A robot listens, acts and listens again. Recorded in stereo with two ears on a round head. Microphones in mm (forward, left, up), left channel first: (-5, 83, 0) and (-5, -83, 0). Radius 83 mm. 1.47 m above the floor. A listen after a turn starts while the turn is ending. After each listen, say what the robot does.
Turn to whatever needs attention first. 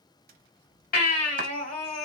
Turn 50° left.
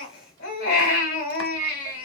Turn 65° left.
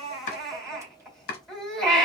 Facing the baby crying, 1 to 2 m away.